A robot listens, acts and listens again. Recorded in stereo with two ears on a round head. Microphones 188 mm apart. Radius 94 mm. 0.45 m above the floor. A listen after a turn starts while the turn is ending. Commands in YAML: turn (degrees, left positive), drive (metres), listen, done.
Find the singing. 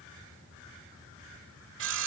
listen: true
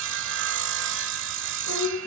turn: 90
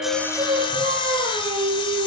turn: -25
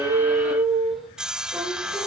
done: "Facing the singing."